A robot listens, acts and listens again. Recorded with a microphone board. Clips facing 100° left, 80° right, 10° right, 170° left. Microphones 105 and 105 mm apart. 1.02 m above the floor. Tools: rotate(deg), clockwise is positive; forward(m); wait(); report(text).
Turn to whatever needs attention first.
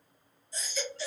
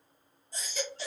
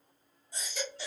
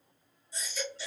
rotate(45)
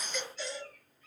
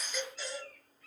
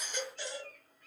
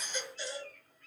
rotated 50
report("Found it: a baby crying, straight ahead, 1 to 2 m away.")